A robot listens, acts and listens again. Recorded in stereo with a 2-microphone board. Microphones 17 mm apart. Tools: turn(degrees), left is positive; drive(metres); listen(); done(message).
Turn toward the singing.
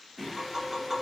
turn(degrees=30)
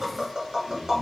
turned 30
turn(degrees=-25)
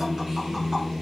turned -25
turn(degrees=-10)
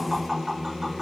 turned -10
done("Facing the singing, 2 to 4 m away.")